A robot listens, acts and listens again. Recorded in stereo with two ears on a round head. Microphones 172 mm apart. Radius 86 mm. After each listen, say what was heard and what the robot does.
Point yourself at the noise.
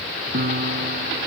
The piano: about 50° right or 130° right. Turn 50° right.
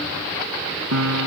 So it is at 85° right. Turn 85° right.
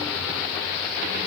Keep listening.
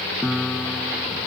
Facing the piano.